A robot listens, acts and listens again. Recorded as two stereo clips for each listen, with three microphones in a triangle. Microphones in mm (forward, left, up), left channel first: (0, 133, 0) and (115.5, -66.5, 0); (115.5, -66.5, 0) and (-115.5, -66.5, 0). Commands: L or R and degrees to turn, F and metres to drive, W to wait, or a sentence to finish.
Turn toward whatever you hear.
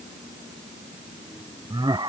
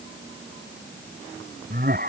R130
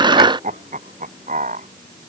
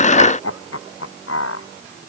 Found it: laughter, straight ahead.